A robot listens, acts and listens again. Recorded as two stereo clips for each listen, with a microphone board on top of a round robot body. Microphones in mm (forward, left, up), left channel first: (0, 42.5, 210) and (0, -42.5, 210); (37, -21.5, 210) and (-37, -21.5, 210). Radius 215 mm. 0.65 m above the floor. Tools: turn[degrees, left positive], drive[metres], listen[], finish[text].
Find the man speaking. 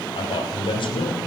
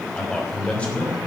Thought: The man speaking: 70° left.
Action: turn[70]
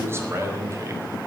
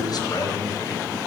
Thought: The man speaking is now 35° right.
Action: turn[-35]
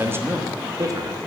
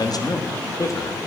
Thought: The man speaking is now 45° right.
Action: turn[-45]
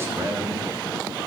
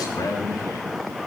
Thought: The man speaking is now 35° right.
Action: turn[-35]
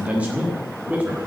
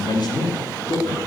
Thought: The man speaking is now 15° right.
Action: turn[-15]
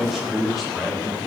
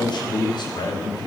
Action: finish[Facing the man speaking, 1 to 2 m away.]